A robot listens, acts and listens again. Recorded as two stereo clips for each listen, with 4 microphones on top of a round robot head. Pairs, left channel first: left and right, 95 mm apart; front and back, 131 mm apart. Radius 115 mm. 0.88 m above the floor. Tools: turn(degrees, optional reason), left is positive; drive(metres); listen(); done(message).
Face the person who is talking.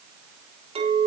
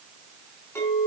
listen()
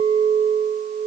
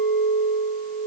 listen()
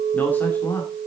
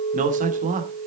turn(degrees=160, reason="The man speaking: 160° left.")
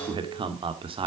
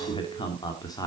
turn(degrees=-65, reason="The man speaking is now 65° right.")
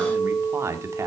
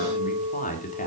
turn(degrees=-30, reason="The man speaking is now 30° right.")
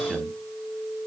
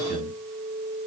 done("Facing the man speaking.")